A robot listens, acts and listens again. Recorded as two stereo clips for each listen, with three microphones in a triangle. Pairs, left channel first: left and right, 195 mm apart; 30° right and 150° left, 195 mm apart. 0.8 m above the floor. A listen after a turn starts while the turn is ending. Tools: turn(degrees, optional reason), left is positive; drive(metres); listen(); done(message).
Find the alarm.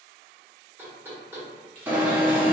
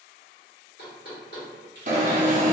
turn(degrees=-170, reason="The alarm: 170° right.")
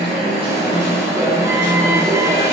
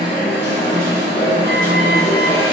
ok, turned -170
turn(degrees=-15, reason="The alarm is now 15° right.")
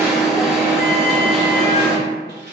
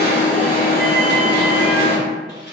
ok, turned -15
done("Found it: an alarm, straight ahead, under 1 m away.")